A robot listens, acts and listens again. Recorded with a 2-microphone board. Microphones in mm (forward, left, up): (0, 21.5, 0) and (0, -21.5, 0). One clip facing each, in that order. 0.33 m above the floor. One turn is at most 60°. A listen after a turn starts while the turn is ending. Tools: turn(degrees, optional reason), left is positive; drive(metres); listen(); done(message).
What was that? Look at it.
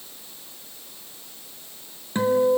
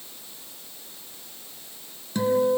turn(degrees=30, reason="The guitar: about 30° left or 150° left.")
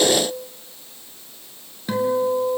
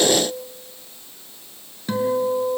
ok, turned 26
done("Found it: a guitar, straight ahead.")